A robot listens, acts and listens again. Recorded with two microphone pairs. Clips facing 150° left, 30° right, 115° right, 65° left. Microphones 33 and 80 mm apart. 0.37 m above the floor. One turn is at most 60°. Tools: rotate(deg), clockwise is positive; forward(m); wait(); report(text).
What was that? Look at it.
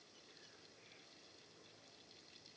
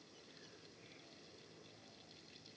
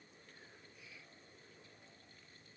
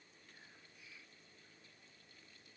wait()
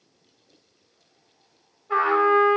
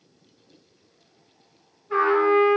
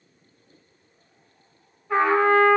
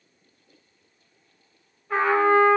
rotate(-60)
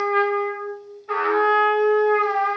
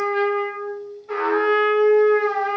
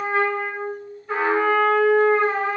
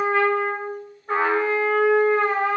rotate(-60)
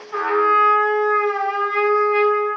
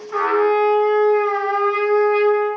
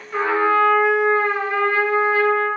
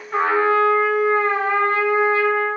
rotate(-35)
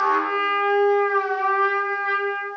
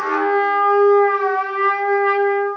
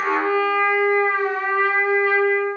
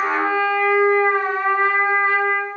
report("Facing the trumpet.")